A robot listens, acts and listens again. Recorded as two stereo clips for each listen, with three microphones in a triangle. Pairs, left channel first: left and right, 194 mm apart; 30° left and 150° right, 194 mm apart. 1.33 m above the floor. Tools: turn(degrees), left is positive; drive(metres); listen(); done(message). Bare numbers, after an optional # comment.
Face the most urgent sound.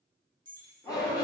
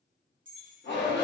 # The shout: 20° left.
turn(20)
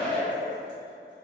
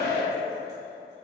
done("Found it: a shout, straight ahead, under 1 m away.")